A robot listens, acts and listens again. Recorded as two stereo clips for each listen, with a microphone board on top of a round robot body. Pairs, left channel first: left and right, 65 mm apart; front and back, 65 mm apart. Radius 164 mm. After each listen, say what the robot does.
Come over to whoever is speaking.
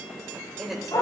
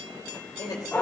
Drive 1.0 m forward.
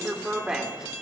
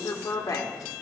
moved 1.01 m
Turn 15° right.
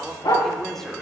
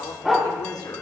Drive 1.0 m forward.
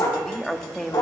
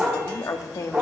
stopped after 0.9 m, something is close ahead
I am next to the woman speaking.